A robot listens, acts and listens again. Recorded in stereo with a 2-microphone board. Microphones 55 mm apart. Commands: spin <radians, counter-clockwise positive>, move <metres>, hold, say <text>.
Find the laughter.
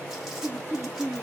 spin -0.79
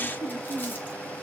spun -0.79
spin 0.17
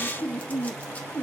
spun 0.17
spin 0.35
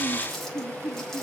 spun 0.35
spin 0.17
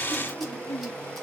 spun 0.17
spin 0.17
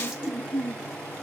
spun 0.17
say Found it: laughter, straight ahead, 2 to 4 m away.